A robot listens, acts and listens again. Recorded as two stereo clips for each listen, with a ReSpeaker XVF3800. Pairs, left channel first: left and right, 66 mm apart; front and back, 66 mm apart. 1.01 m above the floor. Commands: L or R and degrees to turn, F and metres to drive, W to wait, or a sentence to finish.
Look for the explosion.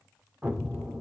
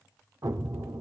R155
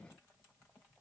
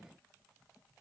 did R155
I heard an explosion from this way, but can't make it out now.